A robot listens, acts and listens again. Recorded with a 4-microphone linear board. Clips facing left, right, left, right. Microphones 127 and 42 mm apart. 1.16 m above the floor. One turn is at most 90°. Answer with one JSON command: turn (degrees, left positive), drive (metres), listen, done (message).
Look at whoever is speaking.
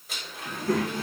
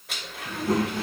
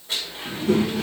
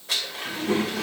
{"turn": -20}
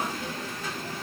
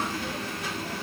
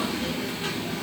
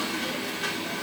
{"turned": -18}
{"turn": -90}
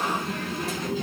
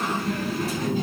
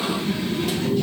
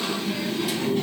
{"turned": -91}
{"turn": -50}
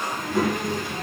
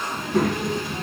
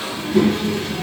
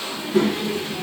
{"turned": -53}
{"done": "Found it: a child speaking, straight ahead."}